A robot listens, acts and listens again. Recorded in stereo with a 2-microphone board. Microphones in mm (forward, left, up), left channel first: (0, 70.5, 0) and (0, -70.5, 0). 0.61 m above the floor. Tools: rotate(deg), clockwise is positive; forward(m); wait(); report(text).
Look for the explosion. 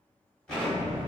rotate(-30)
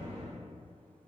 rotate(20)
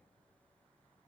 report("Facing where the explosion came from. I can't hear it now.")